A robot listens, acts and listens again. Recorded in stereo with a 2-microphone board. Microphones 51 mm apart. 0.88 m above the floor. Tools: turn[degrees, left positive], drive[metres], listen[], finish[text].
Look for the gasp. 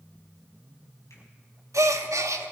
Action: turn[-90]
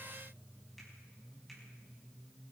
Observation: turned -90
Action: finish[Facing where the gasp came from. I can't hear it now.]